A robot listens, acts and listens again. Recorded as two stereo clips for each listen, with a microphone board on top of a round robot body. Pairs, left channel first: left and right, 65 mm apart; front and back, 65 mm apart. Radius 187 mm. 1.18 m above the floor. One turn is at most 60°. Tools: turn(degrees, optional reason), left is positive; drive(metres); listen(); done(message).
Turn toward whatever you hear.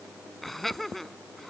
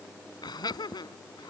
done("Facing the laughter.")